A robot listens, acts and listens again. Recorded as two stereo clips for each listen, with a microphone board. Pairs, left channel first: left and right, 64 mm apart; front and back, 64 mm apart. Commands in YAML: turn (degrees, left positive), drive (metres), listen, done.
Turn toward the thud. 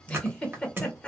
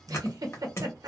turn: -40
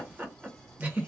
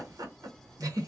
done: "I heard a thud from this way, but can't make it out now."